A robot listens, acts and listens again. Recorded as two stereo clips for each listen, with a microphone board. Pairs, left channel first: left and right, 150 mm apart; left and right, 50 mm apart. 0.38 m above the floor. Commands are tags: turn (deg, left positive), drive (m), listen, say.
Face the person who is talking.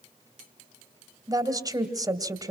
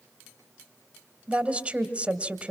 <turn deg="-25"/>
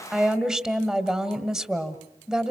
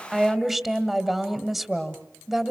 <say>Facing the woman speaking, 1 to 2 m away.</say>